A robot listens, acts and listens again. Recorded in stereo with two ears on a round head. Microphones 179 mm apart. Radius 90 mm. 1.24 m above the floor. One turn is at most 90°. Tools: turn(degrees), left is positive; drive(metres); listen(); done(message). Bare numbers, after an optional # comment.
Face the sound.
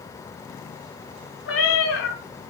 # The cat meowing: about 70° left or 110° left.
turn(70)
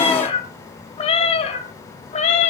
# So it is at 35° left.
turn(35)
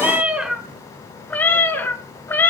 # The cat meowing is now 10° left.
turn(10)
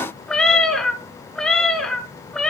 done("Facing the cat meowing.")